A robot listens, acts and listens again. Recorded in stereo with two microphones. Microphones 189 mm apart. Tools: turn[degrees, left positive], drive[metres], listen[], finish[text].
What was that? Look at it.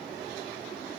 Action: listen[]
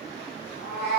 Thought: The cat meowing: about 65° left or 115° left.
Action: turn[65]
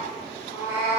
Thought: So it is at 15° right.
Action: turn[-15]
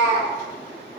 Thought: The cat meowing is now 10° right.
Action: turn[-10]
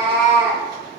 Thought: The cat meowing is now 10° right.
Action: turn[-10]
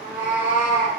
Action: finish[Facing the cat meowing.]